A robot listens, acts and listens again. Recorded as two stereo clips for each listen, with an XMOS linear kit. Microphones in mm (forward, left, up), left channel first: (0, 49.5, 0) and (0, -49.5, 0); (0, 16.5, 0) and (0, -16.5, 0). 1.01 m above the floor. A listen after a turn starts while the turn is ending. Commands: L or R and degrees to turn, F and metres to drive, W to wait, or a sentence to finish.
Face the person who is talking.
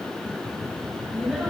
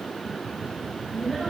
R30
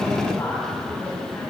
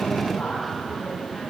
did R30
L25
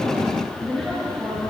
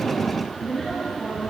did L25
Found it: a woman speaking, straight ahead.